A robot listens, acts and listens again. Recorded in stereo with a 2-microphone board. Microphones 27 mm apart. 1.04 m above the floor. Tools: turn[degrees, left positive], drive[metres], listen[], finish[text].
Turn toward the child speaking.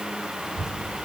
Thought: The child speaking: about 25° right or 155° right.
Action: turn[-25]
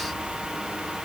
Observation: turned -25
Thought: So it is at 130° right.
Action: turn[-130]
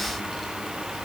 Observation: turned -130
Action: finish[Found it: a child speaking, straight ahead.]